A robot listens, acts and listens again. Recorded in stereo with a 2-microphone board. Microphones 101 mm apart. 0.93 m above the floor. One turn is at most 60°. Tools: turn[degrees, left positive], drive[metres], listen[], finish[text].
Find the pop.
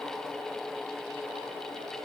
Action: listen[]
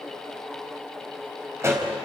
Thought: The pop: about 25° right or 155° right.
Action: turn[-25]
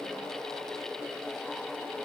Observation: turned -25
Action: listen[]
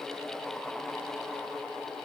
Action: finish[I heard a pop, but can't make it out now. It was about straight ahead or 130° right.]